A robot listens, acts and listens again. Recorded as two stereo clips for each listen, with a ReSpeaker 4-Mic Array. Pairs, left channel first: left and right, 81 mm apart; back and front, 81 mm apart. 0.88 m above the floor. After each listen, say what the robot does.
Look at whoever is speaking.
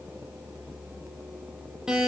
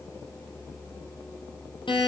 Keep listening.
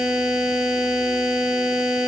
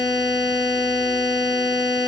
Keep listening.
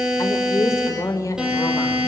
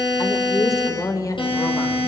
Turn 135° left.
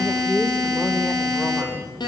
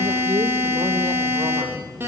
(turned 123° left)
Turn 15° left.
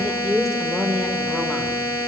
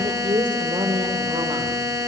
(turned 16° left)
Facing the woman speaking, 2 to 4 m away.